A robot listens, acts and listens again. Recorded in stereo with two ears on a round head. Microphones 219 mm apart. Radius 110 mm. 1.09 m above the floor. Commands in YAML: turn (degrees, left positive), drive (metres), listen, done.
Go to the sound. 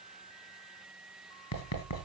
turn: 65
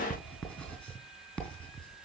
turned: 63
drive: 1.0
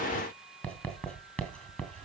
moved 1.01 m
drive: 1.0
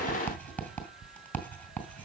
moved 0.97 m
drive: 1.0
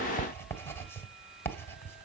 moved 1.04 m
turn: 10
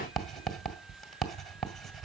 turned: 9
drive: 1.0
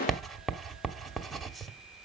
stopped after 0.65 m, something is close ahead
done: "I am next to the writing."